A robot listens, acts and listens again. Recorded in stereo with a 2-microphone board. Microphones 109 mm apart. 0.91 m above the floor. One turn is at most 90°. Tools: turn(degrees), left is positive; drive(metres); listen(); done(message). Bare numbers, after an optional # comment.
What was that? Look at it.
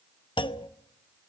# The clunk: about 45° left or 135° left.
turn(45)
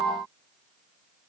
listen()
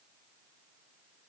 done("I heard a clunk, but can't make it out now. It was about straight ahead or 90° left.")